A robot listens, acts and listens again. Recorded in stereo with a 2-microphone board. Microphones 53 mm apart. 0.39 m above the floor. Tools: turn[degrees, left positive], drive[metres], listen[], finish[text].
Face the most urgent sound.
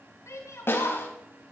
Thought: The shout: about 75° left or 105° left.
Action: turn[75]
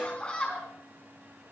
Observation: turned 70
Thought: So it is at 25° left.
Action: turn[25]
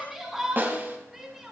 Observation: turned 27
Action: finish[Found it: a shout, straight ahead, over 4 m away.]